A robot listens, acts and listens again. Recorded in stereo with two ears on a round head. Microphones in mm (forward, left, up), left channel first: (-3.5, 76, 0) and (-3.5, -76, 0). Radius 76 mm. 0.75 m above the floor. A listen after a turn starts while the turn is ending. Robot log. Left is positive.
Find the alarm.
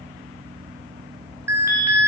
cmd yaw -30
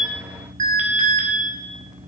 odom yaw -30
note: So it is at 135° right.
cmd yaw -135
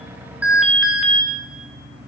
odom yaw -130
end: Found it: an alarm, straight ahead, 1 to 2 m away.